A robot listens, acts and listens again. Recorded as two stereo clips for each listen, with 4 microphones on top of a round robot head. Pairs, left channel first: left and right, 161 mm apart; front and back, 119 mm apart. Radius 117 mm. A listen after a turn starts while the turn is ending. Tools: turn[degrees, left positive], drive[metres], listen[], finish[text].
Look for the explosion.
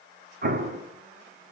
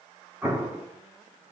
Thought: The explosion: 105° right.
Action: turn[-105]
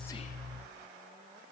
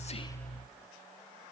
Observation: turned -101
Action: finish[I heard an explosion from this way, but can't make it out now.]